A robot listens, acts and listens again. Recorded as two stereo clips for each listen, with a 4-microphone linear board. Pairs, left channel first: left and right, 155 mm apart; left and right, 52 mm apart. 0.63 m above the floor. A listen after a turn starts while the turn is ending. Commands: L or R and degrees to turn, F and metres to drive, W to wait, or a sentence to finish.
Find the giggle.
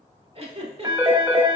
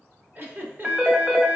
R40
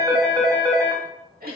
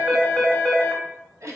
R100
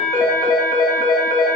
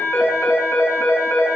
W
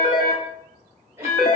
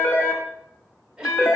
R15
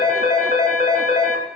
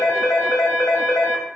W
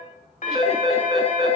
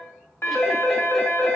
W
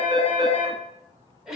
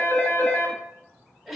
Found it: a giggle, straight ahead, under 1 m away.